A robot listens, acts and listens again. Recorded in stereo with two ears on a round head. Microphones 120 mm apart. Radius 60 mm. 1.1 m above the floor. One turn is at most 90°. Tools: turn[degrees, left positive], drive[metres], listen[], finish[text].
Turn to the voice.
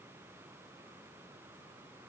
Action: listen[]
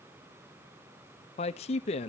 Thought: The man speaking: about 50° left or 130° left.
Action: turn[50]
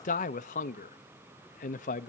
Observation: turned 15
Thought: So it is at 120° left.
Action: turn[90]
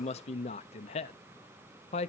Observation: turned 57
Thought: The man speaking is now 55° left.
Action: turn[55]
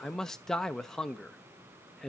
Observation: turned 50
Action: finish[Facing the man speaking.]